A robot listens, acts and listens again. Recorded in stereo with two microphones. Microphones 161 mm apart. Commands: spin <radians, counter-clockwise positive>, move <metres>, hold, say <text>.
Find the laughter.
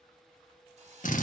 hold
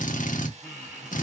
spin -0.52
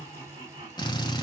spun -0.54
spin -2.53
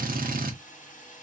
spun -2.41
spin -0.17
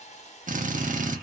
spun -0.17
hold
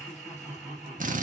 say Facing the laughter, 1 to 2 m away.